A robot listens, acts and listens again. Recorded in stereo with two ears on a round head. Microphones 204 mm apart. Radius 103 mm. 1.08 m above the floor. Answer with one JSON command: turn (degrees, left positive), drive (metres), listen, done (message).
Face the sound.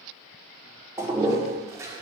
{"turn": -30}
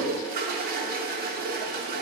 {"turn": -135}
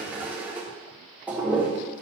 {"done": "Found it: a toilet flushing, straight ahead."}